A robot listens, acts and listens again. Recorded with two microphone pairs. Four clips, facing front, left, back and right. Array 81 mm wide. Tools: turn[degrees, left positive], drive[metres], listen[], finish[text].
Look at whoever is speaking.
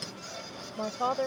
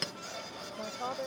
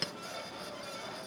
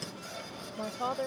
Thought: The woman speaking: 20° right.
Action: turn[-20]
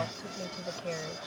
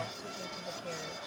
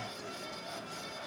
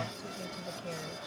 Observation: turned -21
Action: finish[Facing the woman speaking.]